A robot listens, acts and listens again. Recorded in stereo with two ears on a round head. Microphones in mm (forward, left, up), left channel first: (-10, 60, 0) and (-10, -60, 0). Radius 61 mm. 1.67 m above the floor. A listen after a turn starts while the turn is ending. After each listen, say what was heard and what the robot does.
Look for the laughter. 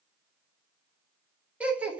Turn 30° right.
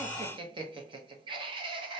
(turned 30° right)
So it is at 135° right. Turn 135° right.
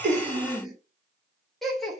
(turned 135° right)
Facing the laughter.